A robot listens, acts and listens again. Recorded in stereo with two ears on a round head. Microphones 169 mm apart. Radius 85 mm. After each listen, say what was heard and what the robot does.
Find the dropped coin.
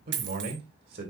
The dropped coin: about 65° right or 115° right. Turn 65° right.
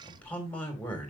Keep listening.
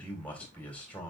I heard a dropped coin, but can't make it out now. It was about straight ahead or 50° right.